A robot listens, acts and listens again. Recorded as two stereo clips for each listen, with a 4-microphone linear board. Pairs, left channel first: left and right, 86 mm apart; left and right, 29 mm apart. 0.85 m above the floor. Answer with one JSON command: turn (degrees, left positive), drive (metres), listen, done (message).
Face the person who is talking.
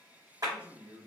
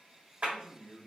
{"turn": -60}
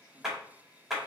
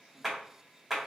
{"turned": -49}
{"listen": true}
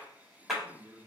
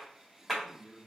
{"turn": -35}
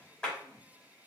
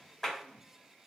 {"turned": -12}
{"turn": -20}
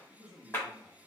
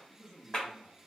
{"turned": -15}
{"done": "Found it: a man speaking, straight ahead, 1 to 2 m away."}